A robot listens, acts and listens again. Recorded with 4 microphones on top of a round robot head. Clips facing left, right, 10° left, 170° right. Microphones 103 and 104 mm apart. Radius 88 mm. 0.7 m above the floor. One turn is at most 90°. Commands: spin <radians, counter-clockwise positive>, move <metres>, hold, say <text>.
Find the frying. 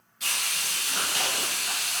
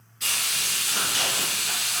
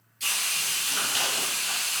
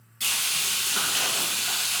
spin 1.57
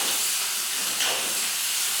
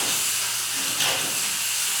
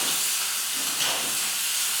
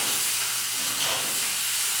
spin 1.48
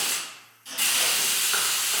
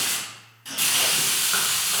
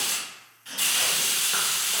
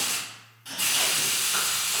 say Facing the frying, 1 to 2 m away.